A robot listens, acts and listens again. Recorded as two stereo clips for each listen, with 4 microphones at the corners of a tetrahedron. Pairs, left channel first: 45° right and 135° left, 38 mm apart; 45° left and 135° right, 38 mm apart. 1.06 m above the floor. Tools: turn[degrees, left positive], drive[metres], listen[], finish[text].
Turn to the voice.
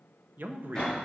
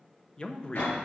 Thought: The man speaking: 110° left.
Action: turn[110]
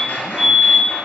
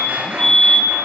Action: listen[]
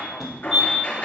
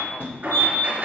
Action: listen[]
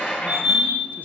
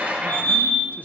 Action: finish[I heard a man speaking from this way, but can't make it out now.]